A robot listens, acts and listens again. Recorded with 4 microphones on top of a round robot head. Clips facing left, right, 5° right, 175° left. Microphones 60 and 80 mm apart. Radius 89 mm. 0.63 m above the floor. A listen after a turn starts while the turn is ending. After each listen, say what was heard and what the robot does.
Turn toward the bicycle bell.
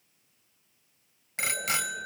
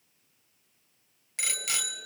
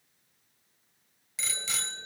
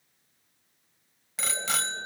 The bicycle bell: 140° left. Turn 140° left.
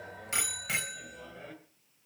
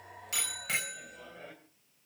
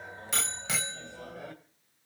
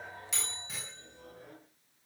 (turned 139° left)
Facing the bicycle bell, 2 to 4 m away.